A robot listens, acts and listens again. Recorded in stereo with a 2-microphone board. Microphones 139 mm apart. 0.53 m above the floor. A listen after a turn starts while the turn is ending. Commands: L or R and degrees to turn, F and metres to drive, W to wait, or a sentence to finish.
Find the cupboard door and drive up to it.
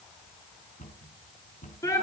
L65
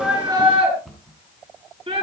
F1.0
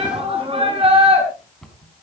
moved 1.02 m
F1.0
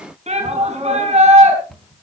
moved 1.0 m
F1.0
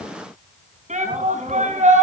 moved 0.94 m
W
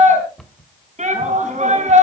F1.0
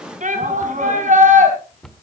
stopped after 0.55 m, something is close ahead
Arrived at the cupboard door, straight ahead.